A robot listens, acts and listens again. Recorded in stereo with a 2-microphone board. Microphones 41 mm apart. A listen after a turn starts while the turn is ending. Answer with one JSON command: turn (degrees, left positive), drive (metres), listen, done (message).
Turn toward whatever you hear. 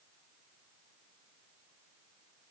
{"listen": true}
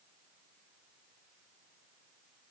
{"listen": true}
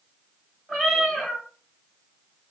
{"turn": 30}
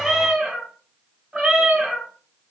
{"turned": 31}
{"turn": -30}
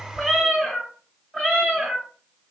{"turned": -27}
{"done": "Found it: a cat meowing, straight ahead."}